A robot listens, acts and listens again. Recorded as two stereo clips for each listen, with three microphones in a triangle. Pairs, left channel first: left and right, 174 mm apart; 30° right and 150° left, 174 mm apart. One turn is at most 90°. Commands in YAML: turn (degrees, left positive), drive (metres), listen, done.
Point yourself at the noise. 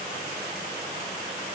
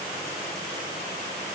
listen: true
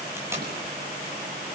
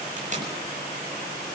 listen: true
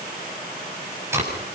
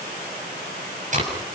turn: -90
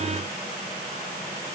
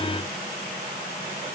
turn: -75
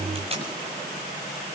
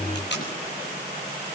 turn: -35
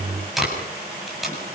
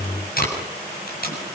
done: "Facing the tape being pulled."